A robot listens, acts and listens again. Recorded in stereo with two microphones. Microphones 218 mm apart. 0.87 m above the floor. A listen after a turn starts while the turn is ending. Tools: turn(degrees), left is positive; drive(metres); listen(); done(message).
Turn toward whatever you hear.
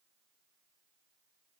listen()
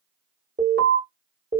turn(degrees=-60)
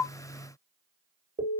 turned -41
turn(degrees=-65)
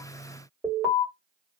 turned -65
done("Facing the alarm.")